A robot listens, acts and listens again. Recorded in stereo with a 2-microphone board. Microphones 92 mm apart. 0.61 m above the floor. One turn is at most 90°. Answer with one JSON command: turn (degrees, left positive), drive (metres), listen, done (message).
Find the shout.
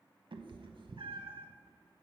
{"listen": true}
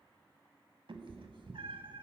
{"listen": true}
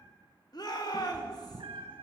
{"turn": 45}
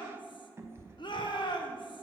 {"turn": 80}
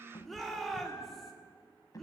{"done": "Facing the shout, 1 to 2 m away."}